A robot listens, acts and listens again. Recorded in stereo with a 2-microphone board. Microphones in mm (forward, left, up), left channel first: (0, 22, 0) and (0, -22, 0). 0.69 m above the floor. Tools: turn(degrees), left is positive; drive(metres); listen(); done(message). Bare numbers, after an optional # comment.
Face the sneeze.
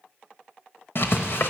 listen()
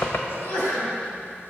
# The sneeze: about 50° left or 130° left.
turn(50)
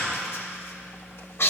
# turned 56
listen()
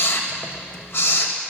done("I heard a sneeze, but can't make it out now. It was about 5° right or 70° left.")